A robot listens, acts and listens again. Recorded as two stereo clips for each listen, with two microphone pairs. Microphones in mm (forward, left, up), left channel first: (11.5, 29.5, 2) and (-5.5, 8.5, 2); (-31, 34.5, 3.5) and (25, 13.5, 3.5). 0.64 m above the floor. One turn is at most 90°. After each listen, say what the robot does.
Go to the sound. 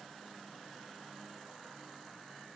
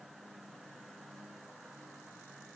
Keep listening.
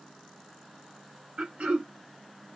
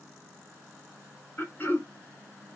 Turn 90° right.
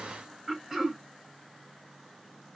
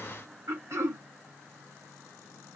Turn 50° right.
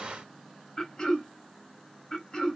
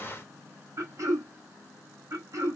Drive 1.0 m forward.
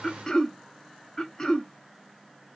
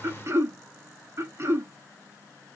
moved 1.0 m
Drive 1.0 m forward.
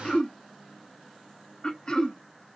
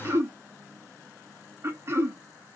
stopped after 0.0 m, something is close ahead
Turn 10° left.
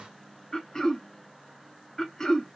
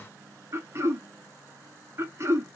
I am next to the throat clearing.